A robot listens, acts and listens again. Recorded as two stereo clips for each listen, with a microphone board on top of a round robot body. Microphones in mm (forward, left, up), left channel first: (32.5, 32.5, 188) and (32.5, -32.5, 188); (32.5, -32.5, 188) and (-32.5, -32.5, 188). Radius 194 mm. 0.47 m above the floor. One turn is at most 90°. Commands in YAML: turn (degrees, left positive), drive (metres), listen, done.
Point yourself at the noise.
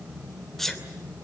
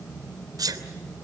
turn: 90
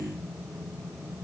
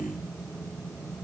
turn: 85
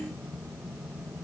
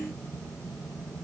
done: "Facing where the sneeze came from. I can't hear it now."